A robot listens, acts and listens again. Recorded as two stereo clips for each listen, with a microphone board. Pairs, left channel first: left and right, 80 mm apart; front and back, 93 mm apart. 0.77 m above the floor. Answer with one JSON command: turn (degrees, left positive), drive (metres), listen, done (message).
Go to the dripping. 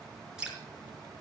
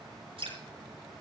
{"turn": -170}
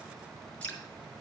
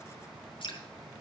{"turn": 15}
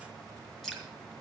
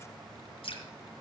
{"drive": 1.0}
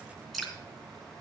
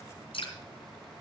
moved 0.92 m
{"drive": 1.0}
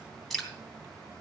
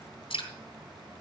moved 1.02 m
{"drive": 1.0}
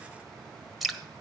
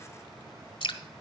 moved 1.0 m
{"drive": 1.0}
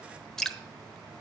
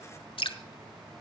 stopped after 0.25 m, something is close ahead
{"done": "Arrived at the dripping, straight ahead."}